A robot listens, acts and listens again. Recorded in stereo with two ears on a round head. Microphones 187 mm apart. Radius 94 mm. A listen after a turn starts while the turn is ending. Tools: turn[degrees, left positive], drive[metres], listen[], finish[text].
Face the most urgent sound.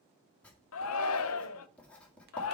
Action: turn[90]
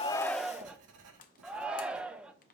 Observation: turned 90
Action: finish[Found it: a shout, straight ahead.]